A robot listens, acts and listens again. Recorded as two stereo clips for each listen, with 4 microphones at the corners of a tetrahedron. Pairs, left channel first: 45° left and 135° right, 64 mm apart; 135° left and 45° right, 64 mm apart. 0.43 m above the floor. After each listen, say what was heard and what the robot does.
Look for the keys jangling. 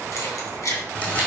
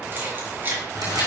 The keys jangling: 10° left. Turn 10° left.
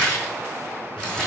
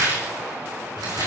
Keep listening.
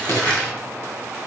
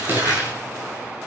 Found it: keys jangling, straight ahead.